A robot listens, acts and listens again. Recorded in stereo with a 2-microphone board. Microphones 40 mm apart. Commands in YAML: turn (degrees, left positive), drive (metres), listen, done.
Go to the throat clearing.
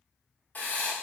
listen: true
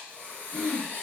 turn: 30
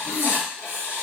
listen: true
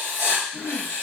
turn: -25
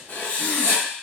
listen: true
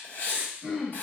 drive: 1.0
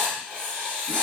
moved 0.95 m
listen: true
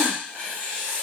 listen: true
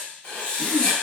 done: "Facing where the throat clearing came from. I can't hear it now. I did not reach it."